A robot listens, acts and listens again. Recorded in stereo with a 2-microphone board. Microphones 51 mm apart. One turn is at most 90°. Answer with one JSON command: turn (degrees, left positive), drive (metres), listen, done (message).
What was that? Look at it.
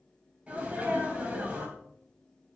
{"turn": -25}
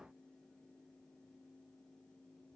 {"listen": true}
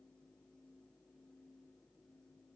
{"done": "I heard a sneeze, but can't make it out now. It was about straight ahead or 130° right."}